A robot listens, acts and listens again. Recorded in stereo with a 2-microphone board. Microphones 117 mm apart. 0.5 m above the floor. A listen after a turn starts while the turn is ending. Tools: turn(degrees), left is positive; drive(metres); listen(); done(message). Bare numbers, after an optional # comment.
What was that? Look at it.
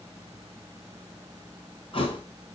# The thud: about 50° left or 130° left.
turn(50)
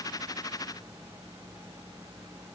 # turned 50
listen()
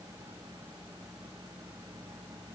done("I heard a thud, but can't make it out now. It was about straight ahead or 80° left.")